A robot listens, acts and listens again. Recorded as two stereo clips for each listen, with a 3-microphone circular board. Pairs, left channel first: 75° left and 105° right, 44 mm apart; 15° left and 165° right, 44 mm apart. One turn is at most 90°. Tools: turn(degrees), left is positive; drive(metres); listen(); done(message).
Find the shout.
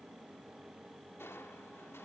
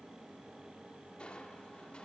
listen()
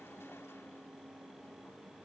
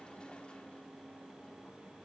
listen()
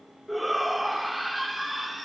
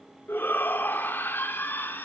turn(degrees=-15)
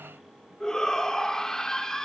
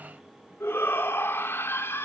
done("Facing the shout, 1 to 2 m away.")